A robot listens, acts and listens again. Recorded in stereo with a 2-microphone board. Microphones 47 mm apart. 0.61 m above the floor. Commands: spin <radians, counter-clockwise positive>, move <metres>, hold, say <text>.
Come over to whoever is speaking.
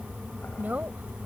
spin -0.70
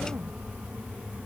hold
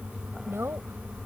spin -1.75
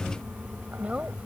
spin -0.52
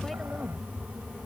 hold
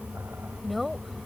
move 1.0
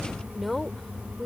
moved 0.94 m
move 1.0
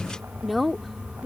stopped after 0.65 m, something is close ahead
say I am next to the woman speaking.